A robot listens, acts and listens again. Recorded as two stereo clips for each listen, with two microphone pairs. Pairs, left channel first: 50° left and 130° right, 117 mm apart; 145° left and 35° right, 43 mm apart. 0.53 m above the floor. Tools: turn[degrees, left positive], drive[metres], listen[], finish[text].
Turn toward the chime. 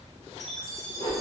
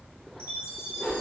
Thought: The chime: 40° right.
Action: turn[-40]
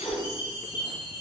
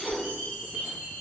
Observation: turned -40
Action: finish[Found it: a chime, straight ahead.]